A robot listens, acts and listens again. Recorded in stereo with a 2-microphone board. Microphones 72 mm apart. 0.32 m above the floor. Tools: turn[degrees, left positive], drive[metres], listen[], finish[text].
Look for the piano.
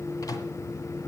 Action: listen[]
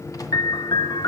Action: turn[90]
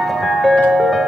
Action: finish[Facing the piano, under 1 m away.]